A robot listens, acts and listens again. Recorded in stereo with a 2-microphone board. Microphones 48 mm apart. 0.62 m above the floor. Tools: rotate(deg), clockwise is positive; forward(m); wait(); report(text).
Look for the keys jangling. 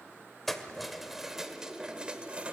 rotate(30)
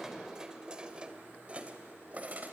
rotate(40)
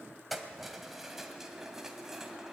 rotate(10)
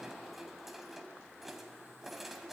report("Facing the keys jangling.")